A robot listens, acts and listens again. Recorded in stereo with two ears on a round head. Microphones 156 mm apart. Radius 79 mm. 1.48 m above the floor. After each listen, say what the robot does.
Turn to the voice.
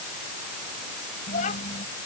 Turn 40° left.
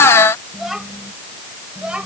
Found it: a child speaking, straight ahead.